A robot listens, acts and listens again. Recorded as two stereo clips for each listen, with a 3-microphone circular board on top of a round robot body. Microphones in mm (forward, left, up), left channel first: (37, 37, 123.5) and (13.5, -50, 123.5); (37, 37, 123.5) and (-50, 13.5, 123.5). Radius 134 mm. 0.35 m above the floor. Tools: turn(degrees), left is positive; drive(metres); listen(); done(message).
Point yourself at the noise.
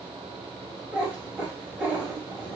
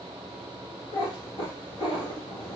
turn(degrees=-30)
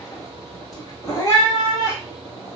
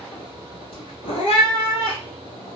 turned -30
turn(degrees=20)
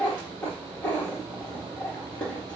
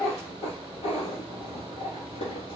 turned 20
done("Facing the cat meowing, 1 to 2 m away.")